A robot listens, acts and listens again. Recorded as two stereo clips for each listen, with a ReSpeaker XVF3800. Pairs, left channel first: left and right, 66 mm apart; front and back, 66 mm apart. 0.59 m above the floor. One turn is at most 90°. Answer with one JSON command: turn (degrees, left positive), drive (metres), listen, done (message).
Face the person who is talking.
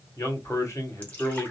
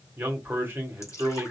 {"turn": 90}
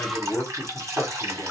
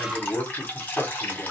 {"turn": 40}
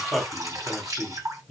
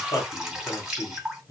{"done": "Facing the man speaking."}